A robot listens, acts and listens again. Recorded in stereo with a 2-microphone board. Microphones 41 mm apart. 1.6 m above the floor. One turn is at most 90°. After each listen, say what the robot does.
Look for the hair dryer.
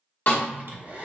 Turn 40° right.
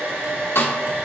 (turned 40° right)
Turn 90° right.
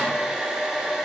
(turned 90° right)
Turn 10° right.
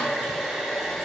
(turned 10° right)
Found it: a hair dryer, straight ahead, under 1 m away.